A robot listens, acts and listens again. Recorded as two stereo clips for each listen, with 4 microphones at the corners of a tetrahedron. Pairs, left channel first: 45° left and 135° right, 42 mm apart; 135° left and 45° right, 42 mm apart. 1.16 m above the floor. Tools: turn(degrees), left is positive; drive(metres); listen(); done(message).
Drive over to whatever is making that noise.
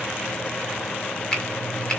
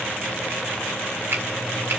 turn(degrees=-25)
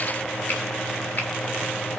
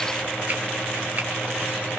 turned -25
listen()
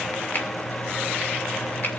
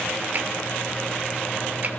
listen()
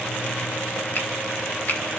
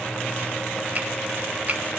drive(metres=1.0)
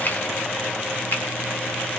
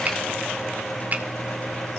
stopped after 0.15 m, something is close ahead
done("Blocked. The finger snap is further on, straight ahead.")